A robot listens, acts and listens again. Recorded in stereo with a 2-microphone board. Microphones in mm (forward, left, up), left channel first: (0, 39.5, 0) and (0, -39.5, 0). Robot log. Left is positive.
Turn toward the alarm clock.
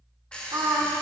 cmd yaw +30
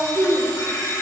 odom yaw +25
note: So it is at 135° left.
cmd yaw +135
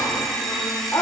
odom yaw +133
end: Facing the alarm clock, 1 to 2 m away.